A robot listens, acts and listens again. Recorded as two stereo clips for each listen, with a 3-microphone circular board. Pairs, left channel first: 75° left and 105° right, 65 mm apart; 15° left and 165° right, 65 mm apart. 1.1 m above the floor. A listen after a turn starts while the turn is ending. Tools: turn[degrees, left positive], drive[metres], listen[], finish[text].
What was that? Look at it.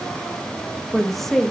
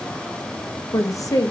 Thought: The woman speaking: 15° right.
Action: turn[-15]
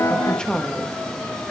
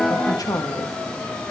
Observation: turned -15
Action: finish[Found it: a woman speaking, straight ahead.]